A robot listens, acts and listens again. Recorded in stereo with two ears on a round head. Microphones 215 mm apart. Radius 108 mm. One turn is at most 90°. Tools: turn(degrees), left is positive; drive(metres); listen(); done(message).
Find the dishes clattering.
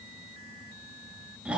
listen()
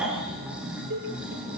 turn(degrees=-50)
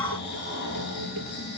listen()
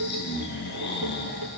turn(degrees=-80)
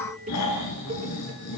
turn(degrees=-25)
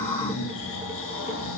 listen()
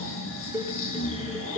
done("Found it: dishes clattering, straight ahead, over 4 m away.")